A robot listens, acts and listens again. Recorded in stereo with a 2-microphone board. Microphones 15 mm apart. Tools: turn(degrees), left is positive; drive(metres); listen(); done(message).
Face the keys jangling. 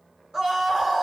listen()
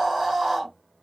listen()
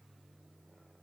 done("I can't make out keys jangling to turn to.")